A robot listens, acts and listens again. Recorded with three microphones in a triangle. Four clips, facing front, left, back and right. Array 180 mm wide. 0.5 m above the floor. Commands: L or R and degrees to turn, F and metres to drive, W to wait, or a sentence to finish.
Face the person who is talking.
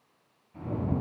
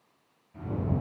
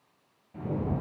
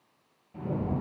W
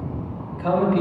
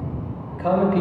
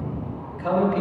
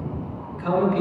L90
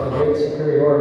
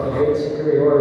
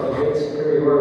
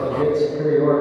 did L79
L10
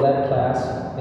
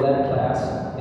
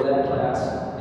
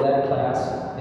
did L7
Facing the man speaking, 2 to 4 m away.